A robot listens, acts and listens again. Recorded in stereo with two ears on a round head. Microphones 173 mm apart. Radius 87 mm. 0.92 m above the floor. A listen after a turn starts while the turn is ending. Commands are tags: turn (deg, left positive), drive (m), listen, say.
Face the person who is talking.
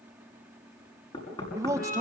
<turn deg="-15"/>
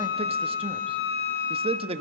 <turn deg="-150"/>
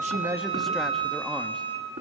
<listen/>
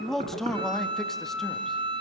<say>Found it: a man speaking, straight ahead.</say>